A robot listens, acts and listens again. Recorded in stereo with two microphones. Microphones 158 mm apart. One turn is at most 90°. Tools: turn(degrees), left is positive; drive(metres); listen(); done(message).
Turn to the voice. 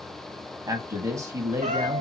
turn(degrees=-20)
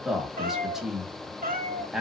done("Facing the man speaking, 1 to 2 m away.")